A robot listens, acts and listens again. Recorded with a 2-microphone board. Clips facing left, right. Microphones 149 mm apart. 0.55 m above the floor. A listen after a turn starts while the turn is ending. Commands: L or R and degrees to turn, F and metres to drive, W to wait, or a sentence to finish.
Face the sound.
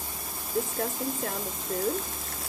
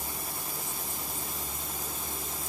L70
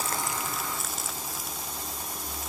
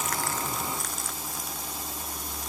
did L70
Found it: crumpling, straight ahead.